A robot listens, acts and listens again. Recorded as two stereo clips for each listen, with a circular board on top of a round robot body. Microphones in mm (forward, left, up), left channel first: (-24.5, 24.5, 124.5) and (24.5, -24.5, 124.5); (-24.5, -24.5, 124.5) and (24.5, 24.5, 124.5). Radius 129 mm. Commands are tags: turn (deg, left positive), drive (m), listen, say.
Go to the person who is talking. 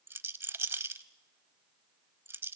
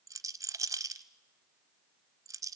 <listen/>
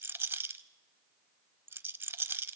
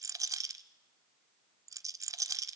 <listen/>
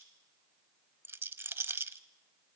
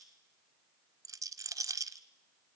<say>I can't make out anyone speaking, only a rattle.</say>